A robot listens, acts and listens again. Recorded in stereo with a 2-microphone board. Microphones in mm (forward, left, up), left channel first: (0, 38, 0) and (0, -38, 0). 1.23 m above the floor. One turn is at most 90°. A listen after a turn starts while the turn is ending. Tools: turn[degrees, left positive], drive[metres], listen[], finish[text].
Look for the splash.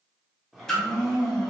Action: turn[30]
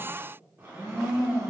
Action: listen[]
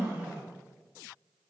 Action: finish[I heard a splash, but can't make it out now. It was about 20° right or 140° left.]